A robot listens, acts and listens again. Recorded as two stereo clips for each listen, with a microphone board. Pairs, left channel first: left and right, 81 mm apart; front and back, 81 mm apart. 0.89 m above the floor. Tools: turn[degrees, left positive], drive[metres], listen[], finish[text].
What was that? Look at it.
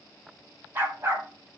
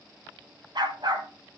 Thought: The dog barking: 150° right.
Action: turn[-150]
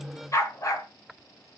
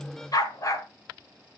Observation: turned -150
Thought: The dog barking is now 45° left.
Action: turn[45]
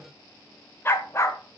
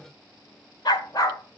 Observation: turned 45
Thought: The dog barking is now 40° left.
Action: turn[40]
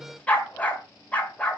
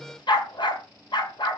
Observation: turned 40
Thought: The dog barking is now 20° left.
Action: turn[20]
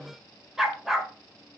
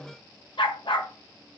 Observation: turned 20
Action: finish[Facing the dog barking, 1 to 2 m away.]